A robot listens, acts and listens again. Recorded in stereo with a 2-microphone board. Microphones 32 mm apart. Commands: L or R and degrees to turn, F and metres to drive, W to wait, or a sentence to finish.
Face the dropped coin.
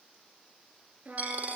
R55
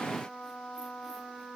W
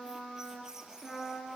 I heard a dropped coin, but can't make it out now. It was about straight ahead or 70° right.